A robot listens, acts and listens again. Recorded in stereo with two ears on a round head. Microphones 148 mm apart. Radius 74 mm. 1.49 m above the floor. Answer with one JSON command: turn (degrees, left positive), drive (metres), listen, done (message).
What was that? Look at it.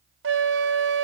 {"turn": -90}
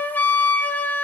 {"turn": 10}
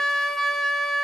{"done": "Found it: a flute, straight ahead, under 1 m away."}